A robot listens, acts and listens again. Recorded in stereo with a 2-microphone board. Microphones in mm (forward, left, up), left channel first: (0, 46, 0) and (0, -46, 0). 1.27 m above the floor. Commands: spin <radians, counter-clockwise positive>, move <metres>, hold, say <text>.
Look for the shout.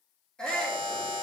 spin 0.52
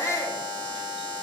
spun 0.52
spin 2.53
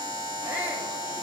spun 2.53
spin -0.35
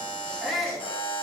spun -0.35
say Found it: a shout, straight ahead, 1 to 2 m away.